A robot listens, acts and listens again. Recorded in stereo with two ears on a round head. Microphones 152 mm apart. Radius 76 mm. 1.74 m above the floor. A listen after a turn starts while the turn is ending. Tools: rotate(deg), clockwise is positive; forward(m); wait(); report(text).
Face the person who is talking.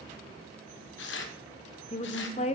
rotate(-40)
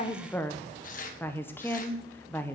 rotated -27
rotate(-15)
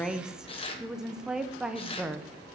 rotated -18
report("Found it: a woman speaking, straight ahead, 1 to 2 m away.")